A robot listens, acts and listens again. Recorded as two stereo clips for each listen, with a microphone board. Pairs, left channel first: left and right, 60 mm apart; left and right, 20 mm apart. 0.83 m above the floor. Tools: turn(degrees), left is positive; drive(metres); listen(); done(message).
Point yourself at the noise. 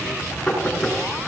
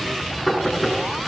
turn(degrees=30)
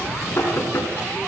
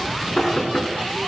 turn(degrees=140)
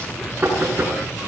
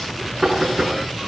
turn(degrees=-35)
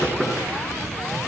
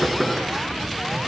done("Facing the knocking, over 4 m away.")